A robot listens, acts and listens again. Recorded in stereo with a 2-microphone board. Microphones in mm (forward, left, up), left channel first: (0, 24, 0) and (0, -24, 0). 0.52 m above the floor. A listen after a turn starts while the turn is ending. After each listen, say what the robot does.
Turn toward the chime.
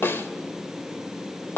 Keep listening.
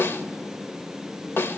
Keep listening.
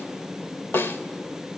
I can't make out a chime to turn to.